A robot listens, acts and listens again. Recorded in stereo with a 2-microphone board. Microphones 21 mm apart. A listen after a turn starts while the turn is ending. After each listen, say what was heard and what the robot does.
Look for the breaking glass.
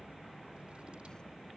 Keep listening.
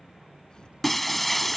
Turn 30° left.
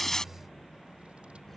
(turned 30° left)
Keep listening.
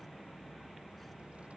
I heard breaking glass, but can't make it out now. It was about 25° right or 145° left.